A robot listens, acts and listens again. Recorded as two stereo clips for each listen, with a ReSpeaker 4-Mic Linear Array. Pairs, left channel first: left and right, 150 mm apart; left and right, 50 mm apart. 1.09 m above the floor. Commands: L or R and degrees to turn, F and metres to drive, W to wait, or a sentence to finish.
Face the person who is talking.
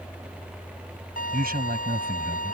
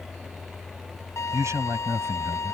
R70
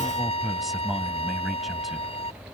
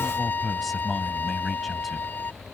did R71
Found it: a man speaking, straight ahead.